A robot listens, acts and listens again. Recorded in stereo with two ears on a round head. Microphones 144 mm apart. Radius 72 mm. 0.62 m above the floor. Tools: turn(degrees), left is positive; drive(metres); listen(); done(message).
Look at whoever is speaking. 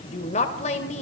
turn(degrees=40)
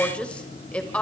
turn(degrees=10)
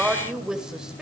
done("Facing the woman speaking.")